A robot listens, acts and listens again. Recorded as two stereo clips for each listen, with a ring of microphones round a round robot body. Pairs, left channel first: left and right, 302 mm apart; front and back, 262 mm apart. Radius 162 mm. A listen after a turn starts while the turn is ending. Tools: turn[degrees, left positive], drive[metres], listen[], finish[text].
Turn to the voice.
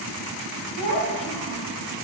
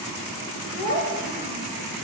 Thought: The child speaking: 115° left.
Action: turn[115]
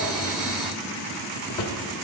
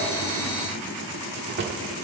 Action: listen[]
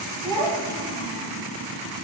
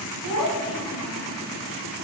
Thought: The child speaking is now 10° left.
Action: turn[10]
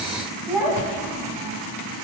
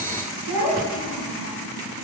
Action: finish[Facing the child speaking.]